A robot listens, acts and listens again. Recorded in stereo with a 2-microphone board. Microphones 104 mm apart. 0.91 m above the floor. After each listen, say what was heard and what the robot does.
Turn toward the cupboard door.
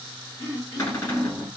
The cupboard door: about 30° left or 150° left. Turn 30° left.
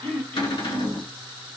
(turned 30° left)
So it is at 115° left. Turn 115° left.
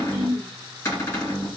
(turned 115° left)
The cupboard door is now 30° left. Turn 30° left.
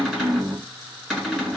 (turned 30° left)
Facing the cupboard door, 1 to 2 m away.